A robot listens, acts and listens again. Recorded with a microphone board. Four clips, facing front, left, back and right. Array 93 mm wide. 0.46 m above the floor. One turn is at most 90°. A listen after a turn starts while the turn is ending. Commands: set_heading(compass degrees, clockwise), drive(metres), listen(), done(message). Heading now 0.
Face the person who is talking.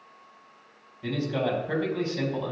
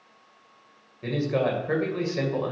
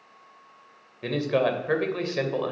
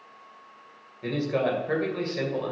set_heading(270)
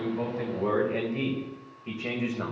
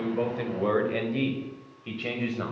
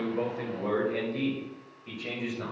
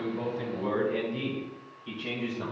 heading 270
set_heading(205)
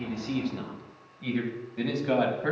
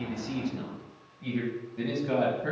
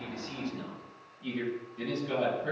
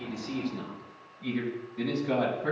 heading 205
set_heading(195)
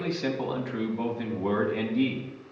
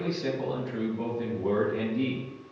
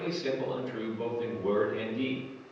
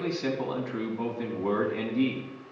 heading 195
done("Found it: a man speaking, straight ahead.")